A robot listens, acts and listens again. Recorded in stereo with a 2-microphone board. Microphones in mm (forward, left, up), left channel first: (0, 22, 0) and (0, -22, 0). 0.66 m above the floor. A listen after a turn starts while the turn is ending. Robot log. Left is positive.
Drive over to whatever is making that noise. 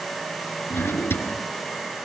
note: The drawer: about 60° left or 120° left.
cmd yaw +60
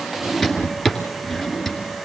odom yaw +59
cmd fwd 1.0
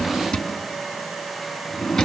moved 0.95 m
note: The drawer is now 10° left.
cmd yaw +10
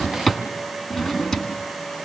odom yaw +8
cmd fwd 1.0
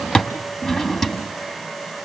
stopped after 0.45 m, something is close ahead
end: Arrived at the drawer, straight ahead.